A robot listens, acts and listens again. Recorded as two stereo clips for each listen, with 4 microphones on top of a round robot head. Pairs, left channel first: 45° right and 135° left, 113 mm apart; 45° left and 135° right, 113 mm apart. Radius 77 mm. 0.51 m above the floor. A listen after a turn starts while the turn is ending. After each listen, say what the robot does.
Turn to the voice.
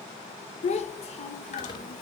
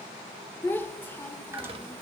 Turn 30° right.
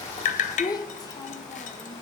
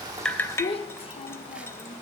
Turn 10° left.
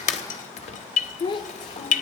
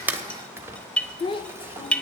Facing the child speaking.